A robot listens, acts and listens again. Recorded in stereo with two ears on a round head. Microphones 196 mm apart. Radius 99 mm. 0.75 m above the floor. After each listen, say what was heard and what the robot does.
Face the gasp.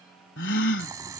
The gasp: about 60° left or 120° left. Turn 60° left.
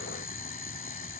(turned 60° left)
Keep listening.
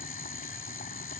I heard a gasp, but can't make it out now. It was about straight ahead or 60° left.